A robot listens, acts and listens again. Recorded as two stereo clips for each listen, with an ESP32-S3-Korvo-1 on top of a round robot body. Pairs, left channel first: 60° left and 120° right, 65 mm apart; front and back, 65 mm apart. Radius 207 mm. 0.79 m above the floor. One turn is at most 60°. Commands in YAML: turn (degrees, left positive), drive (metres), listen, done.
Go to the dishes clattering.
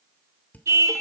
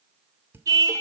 turn: 60
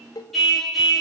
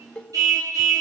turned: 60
turn: 60
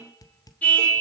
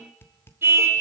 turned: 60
turn: 50
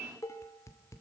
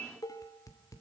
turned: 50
turn: 25
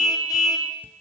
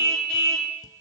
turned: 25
listen: true
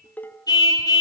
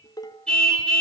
drive: 1.0
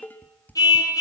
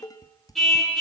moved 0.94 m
drive: 1.0
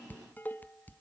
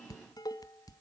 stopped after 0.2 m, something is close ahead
done: "I am next to the dishes clattering."